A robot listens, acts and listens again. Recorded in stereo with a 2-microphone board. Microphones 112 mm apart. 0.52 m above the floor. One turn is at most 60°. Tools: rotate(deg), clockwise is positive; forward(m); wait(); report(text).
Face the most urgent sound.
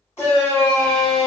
rotate(-25)
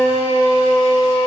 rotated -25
rotate(-60)
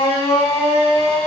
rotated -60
rotate(-60)
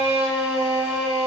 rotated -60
rotate(20)
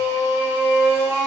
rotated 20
report("Facing the shout.")